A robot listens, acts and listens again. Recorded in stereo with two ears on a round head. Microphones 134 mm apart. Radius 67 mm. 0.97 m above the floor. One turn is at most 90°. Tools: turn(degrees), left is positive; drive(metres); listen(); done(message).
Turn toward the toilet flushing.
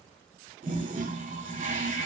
turn(degrees=-55)
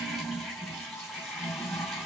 done("Facing the toilet flushing, 2 to 4 m away.")